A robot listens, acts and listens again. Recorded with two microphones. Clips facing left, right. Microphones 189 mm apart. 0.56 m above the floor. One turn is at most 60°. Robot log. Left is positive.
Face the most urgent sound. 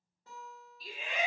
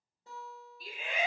note: The shout: about 55° right or 125° right.
cmd yaw -55
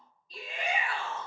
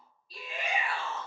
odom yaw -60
note: So it is at 10° right.
cmd yaw -10
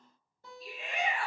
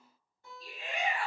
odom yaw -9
end: Facing the shout, 1 to 2 m away.